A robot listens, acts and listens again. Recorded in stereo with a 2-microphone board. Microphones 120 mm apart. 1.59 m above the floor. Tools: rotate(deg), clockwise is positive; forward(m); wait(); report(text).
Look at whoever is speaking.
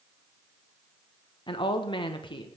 rotate(-40)
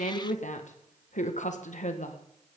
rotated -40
rotate(-100)
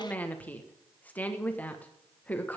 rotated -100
rotate(-10)
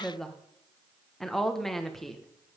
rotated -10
report("Facing the woman speaking.")